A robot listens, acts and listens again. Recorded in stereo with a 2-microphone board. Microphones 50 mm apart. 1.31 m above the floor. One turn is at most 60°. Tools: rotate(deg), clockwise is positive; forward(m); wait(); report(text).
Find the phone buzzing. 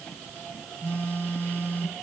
rotate(-45)
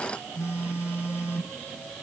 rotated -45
rotate(-60)
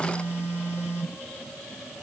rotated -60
rotate(-45)
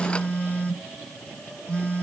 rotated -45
rotate(-20)
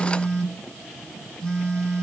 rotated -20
report("Facing the phone buzzing, 2 to 4 m away.")